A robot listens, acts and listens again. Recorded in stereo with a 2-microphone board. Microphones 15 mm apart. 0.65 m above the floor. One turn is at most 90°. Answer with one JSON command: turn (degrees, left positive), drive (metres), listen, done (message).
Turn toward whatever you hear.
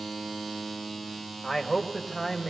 {"turn": -15}
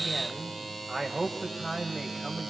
{"turn": -25}
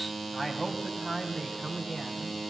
{"turn": -30}
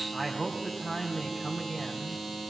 {"turn": 20}
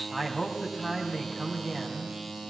{"done": "Facing the man speaking, 2 to 4 m away."}